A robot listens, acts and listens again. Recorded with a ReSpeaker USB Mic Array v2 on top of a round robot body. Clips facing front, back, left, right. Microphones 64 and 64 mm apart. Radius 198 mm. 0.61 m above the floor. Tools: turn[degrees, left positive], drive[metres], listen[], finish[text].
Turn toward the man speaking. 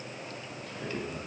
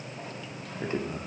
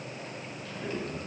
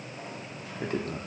Thought: The man speaking: 125° right.
Action: turn[-125]
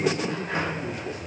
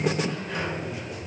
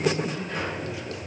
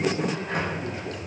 Action: listen[]
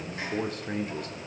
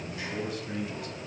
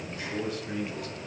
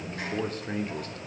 Thought: The man speaking is now 45° right.
Action: turn[-45]
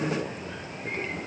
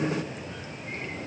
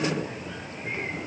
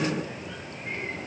Action: listen[]
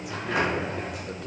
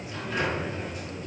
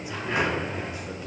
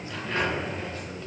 Action: listen[]
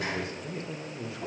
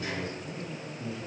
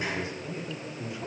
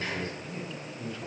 Thought: The man speaking is now 15° left.
Action: turn[15]
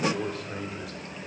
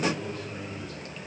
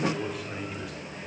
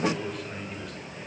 Action: finish[Found it: a man speaking, straight ahead.]